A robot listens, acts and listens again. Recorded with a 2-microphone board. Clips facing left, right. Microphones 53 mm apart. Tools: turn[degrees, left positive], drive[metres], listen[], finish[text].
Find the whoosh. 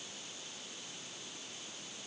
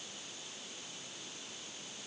Action: listen[]
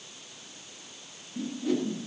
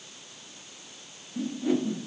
Thought: The whoosh: about 20° right or 160° right.
Action: turn[-20]
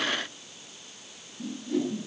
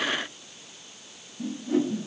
Thought: So it is at 140° right.
Action: turn[-140]
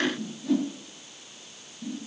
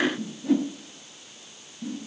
Thought: The whoosh is now 20° right.
Action: turn[-20]
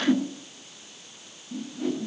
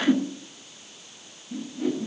Action: finish[Found it: a whoosh, straight ahead.]